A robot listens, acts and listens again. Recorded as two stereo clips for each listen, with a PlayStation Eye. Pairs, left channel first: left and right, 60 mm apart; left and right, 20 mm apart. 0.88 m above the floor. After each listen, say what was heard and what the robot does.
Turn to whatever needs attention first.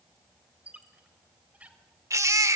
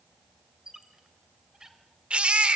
The baby crying: about 60° right or 120° right. Turn 60° right.
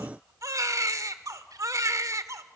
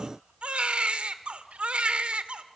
So it is at 60° right. Turn 60° right.
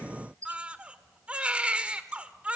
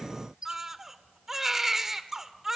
The baby crying is now 15° right. Turn 15° right.
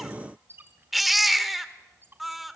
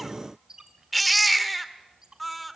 Facing the baby crying, 1 to 2 m away.